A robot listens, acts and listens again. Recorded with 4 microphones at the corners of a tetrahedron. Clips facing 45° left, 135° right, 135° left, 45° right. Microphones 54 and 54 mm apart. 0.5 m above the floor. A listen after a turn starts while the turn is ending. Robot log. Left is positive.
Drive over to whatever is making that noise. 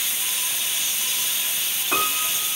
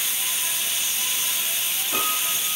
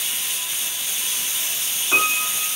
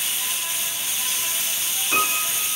note: The piano: 65° left.
cmd yaw +65
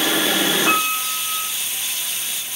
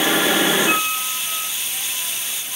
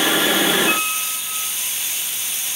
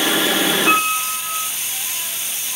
cmd fwd 1.0
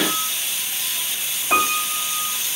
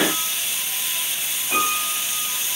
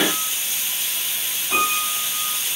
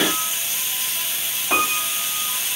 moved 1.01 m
cmd fwd 1.0
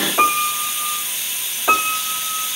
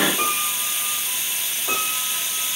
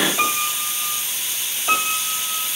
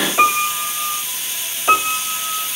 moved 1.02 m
note: The piano is now 10° left.
cmd yaw +10
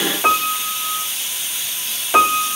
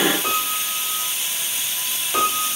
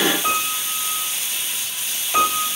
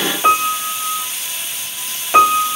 cmd fwd 1.0
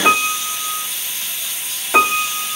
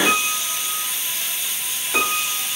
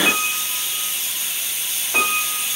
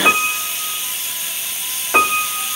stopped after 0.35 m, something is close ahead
end: I am next to the piano.